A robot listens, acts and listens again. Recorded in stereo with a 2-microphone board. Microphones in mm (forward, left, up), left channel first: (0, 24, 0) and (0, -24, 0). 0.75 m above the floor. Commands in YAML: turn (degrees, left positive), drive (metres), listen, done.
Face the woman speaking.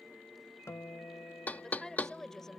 turn: 30
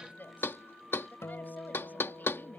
turn: 140
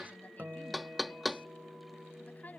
turn: 35
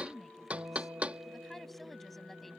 done: "Found it: a woman speaking, straight ahead."